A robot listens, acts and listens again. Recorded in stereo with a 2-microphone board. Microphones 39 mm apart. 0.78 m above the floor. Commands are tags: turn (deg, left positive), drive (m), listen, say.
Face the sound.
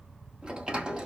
<turn deg="-20"/>
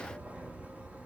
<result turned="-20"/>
<listen/>
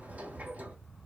<turn deg="-135"/>
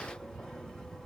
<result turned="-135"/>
<turn deg="15"/>
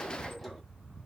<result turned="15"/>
<listen/>
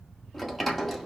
<say>Facing the sliding door.</say>